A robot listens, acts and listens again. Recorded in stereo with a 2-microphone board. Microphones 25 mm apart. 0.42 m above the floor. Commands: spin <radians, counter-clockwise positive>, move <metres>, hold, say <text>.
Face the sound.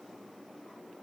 hold
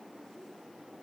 hold
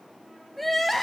spin 0.52
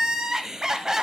spin -0.44
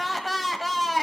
say Facing the crying, 1 to 2 m away.